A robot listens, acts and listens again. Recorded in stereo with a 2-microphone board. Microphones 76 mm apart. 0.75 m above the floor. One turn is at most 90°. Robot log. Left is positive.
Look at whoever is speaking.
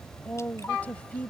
note: The woman speaking: about 20° left or 160° left.
cmd yaw +20
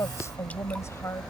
note: So it is at 140° left.
cmd yaw +90
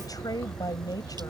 note: The woman speaking is now 55° left.
cmd yaw +55
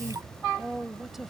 end: Facing the woman speaking.